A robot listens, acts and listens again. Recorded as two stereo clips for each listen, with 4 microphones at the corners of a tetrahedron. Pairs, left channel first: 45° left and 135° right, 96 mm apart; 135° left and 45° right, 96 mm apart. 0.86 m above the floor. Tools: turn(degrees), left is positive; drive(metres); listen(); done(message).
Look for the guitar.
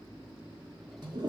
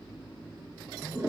listen()
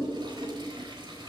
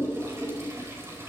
listen()
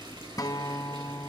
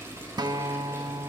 done("Found it: a guitar, straight ahead, under 1 m away.")